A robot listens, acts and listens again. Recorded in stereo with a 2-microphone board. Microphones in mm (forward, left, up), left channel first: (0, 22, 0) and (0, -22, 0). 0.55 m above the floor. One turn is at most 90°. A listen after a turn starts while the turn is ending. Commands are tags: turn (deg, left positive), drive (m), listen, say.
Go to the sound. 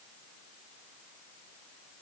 <listen/>
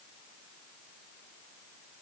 <listen/>
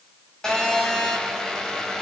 <turn deg="15"/>
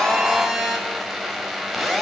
<drive m="1.0"/>
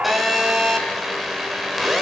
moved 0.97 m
<drive m="1.0"/>
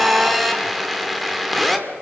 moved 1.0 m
<drive m="1.0"/>
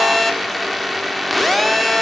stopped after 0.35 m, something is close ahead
<say>I am next to the phone buzzing.</say>